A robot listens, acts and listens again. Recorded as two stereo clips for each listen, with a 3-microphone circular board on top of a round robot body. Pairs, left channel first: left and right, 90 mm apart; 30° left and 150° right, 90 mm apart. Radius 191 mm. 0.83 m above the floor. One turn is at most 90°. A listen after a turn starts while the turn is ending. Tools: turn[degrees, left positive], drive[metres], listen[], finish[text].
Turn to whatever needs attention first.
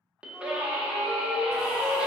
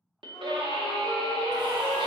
Thought: The scream: 165° right.
Action: turn[-90]
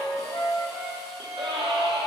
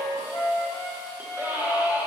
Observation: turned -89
Thought: The scream is now 80° right.
Action: turn[-80]
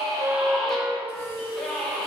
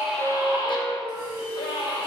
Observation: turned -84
Action: finish[Found it: a scream, straight ahead.]